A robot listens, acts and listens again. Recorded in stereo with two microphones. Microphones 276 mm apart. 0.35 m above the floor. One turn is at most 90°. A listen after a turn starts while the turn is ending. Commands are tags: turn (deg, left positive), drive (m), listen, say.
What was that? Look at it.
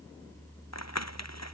<turn deg="75"/>
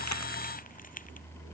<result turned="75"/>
<turn deg="30"/>
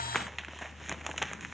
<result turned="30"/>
<say>Found it: crumpling, straight ahead.</say>